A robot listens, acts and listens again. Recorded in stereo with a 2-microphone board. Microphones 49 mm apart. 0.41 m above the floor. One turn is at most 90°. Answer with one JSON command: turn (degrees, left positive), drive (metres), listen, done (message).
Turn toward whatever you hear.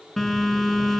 {"turn": 30}
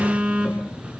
{"turn": -25}
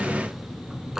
{"turn": -10}
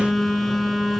{"done": "Found it: a phone buzzing, straight ahead, 2 to 4 m away."}